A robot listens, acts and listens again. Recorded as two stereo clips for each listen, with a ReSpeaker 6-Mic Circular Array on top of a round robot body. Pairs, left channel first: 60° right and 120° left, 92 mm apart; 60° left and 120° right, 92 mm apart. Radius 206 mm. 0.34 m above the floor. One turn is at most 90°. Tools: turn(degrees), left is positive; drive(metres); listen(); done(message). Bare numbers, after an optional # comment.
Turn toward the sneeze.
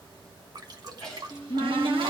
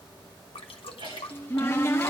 # The sneeze: 140° right.
turn(-90)
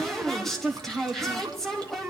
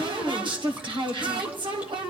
# Nothing new. It was at 50° right.
turn(-50)
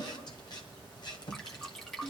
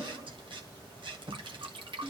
done("Facing where the sneeze came from. I can't hear it now.")